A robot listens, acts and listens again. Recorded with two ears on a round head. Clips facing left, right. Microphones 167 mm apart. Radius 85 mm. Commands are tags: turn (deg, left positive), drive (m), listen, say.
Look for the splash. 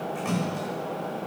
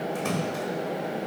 <turn deg="-55"/>
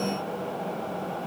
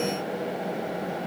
<listen/>
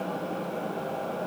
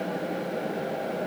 <say>I heard a splash, but can't make it out now. It was about straight ahead or 70° right.</say>